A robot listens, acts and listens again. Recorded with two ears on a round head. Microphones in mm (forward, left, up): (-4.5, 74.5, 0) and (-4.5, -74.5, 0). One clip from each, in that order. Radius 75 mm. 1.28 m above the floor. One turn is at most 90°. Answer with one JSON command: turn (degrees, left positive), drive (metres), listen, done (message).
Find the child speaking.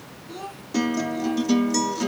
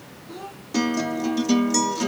{"turn": 15}
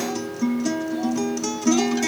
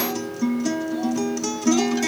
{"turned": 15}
{"listen": true}
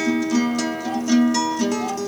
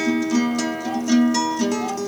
{"listen": true}
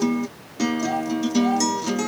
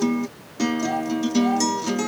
{"done": "I heard a child speaking, but can't make it out now. It was about straight ahead or 150° left."}